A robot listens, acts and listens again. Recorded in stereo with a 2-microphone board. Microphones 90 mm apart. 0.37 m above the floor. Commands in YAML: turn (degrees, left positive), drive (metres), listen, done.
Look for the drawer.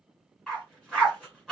listen: true
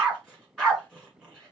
listen: true
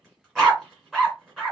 done: "I can't make out a drawer to turn to."